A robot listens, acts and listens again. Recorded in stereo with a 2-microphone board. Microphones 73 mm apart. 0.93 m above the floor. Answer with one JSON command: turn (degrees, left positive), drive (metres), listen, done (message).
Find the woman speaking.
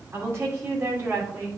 {"turn": -30}
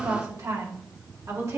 {"turn": -135}
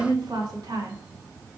{"turn": -70}
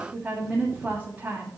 {"turn": -25}
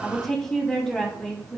{"turn": 10}
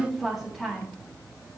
{"done": "Found it: a woman speaking, straight ahead."}